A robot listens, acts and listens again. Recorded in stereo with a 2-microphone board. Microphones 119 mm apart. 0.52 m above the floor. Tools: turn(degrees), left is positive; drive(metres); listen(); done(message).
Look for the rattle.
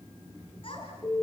listen()
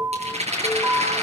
turn(degrees=-90)
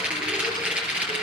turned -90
turn(degrees=-10)
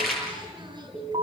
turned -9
done("Facing the rattle, over 4 m away.")